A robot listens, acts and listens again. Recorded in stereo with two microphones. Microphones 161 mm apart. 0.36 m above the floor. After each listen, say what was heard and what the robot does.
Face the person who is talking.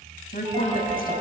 The woman speaking: about 65° left or 115° left. Turn 65° left.
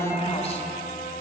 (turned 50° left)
So it is at 40° left. Turn 40° left.
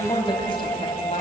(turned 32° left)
The woman speaking is now 40° left. Turn 40° left.
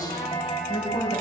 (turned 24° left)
The woman speaking is now 35° left. Turn 35° left.
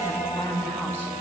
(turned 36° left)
The woman speaking is now 10° left. Turn 10° left.
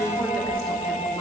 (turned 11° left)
Found it: a woman speaking, straight ahead.